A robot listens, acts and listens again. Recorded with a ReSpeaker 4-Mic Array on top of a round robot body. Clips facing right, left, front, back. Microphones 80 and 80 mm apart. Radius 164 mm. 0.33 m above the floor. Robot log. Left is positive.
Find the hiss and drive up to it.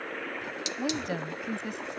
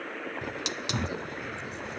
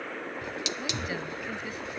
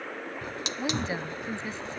note: The hiss: 130° left.
cmd yaw +130
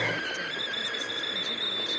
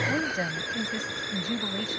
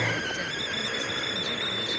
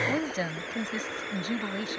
note: The hiss is now 20° left.
cmd yaw +20
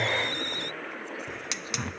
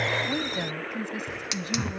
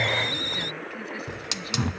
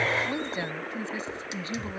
cmd fwd 1.0
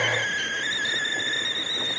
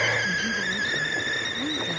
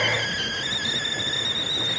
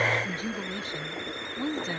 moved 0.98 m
cmd fwd 1.0
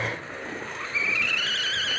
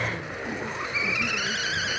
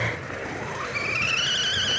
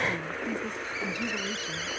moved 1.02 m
note: The hiss is now 15° left.
cmd yaw +15
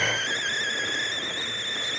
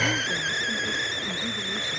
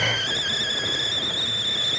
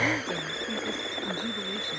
cmd fwd 1.0
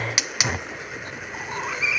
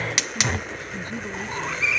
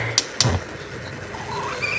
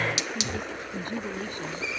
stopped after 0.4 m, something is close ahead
end: Arrived at the hiss, straight ahead.